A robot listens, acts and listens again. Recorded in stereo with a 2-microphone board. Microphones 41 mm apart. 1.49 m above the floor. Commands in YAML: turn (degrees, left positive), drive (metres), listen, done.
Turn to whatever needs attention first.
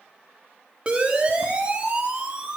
turn: -25
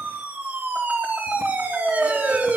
turn: -130
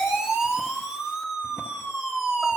turn: -10
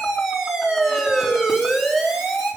done: "Facing the siren, 2 to 4 m away."